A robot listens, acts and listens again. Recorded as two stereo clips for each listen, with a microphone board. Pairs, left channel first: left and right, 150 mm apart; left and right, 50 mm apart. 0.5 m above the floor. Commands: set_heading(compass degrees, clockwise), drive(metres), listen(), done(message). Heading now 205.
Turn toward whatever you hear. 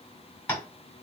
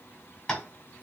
set_heading(175)
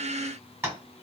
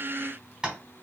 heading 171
set_heading(191)
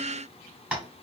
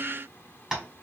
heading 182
set_heading(192)
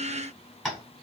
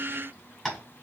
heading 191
done("Found it: tapping, straight ahead.")